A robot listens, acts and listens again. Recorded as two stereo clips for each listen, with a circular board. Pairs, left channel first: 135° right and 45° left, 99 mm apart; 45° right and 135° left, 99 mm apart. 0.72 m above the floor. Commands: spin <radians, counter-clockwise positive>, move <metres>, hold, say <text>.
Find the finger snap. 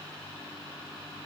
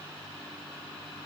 hold
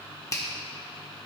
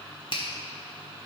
spin -1.40
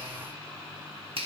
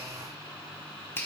spin 0.35
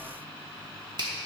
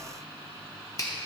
say Found it: a finger snap, straight ahead.